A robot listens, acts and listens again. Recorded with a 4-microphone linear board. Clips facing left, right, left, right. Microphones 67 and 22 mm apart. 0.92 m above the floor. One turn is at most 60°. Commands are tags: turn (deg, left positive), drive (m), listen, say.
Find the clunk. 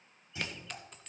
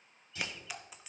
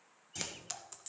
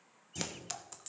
<turn deg="20"/>
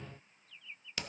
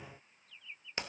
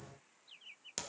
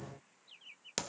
<listen/>
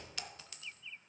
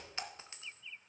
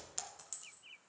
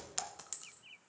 <say>I heard a clunk, but can't make it out now. It was about straight ahead or 140° left.</say>